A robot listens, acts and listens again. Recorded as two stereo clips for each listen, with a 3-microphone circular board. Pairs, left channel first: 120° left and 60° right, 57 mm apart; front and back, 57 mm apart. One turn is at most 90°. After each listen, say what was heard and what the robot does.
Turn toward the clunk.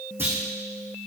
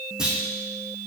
The clunk: 105° right. Turn 90° right.
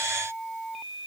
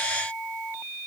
Nothing new. It was at 15° right. Turn 15° right.
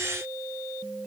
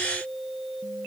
I heard a clunk from this way, but can't make it out now.